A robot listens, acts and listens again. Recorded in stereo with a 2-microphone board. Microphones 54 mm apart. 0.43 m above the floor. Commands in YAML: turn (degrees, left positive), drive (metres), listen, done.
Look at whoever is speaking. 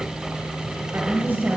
turn: -40
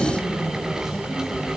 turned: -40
listen: true
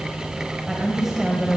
turn: -10
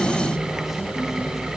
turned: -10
listen: true
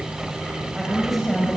done: "Found it: a woman speaking, straight ahead."